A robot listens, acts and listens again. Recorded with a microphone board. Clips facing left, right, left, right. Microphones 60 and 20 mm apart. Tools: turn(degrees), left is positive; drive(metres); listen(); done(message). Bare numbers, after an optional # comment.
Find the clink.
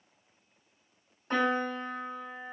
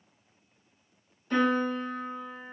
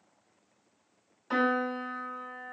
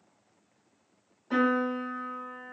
listen()
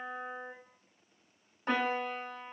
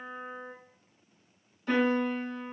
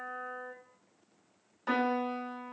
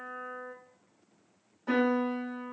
listen()
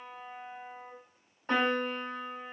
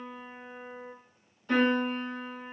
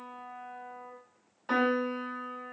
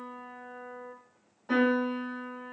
done("I can't make out a clink, only a piano.")